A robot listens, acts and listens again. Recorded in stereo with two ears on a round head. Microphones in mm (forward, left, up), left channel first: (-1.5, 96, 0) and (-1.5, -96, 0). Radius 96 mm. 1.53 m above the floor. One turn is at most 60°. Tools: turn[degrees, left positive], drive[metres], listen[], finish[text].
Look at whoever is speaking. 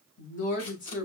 Thought: The woman speaking: about 40° left or 140° left.
Action: turn[40]
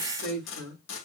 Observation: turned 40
Action: finish[Facing the woman speaking.]